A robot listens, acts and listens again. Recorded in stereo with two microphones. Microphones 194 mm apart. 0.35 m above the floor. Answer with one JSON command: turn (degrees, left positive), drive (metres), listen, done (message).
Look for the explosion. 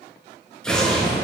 {"turn": 30}
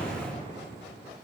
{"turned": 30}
{"listen": true}
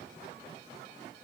{"done": "I heard an explosion, but can't make it out now. It was about 25° right or 145° left."}